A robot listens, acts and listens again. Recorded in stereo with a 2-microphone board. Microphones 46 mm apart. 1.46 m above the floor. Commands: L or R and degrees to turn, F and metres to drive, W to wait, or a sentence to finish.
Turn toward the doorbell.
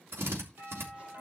R55
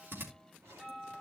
Facing the doorbell.